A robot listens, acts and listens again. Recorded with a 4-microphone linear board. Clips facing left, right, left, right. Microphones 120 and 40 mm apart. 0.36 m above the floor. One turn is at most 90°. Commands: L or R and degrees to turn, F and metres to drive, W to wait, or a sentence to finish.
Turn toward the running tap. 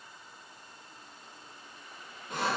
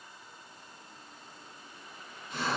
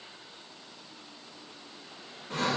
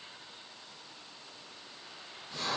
W
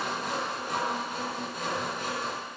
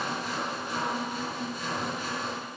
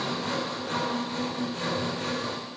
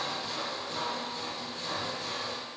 W
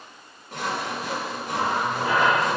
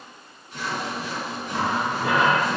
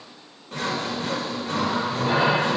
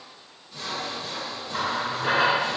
R70
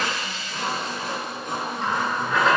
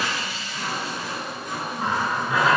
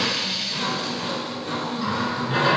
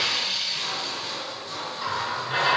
R10
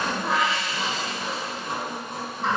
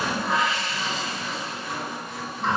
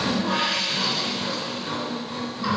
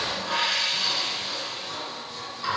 Facing the running tap, 2 to 4 m away.